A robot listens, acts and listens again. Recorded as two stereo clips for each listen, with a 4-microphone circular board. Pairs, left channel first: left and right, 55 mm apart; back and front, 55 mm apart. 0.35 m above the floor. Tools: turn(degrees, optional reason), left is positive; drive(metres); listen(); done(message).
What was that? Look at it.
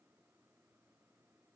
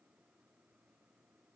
listen()
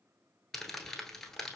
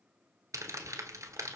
done("Facing the crumpling, under 1 m away.")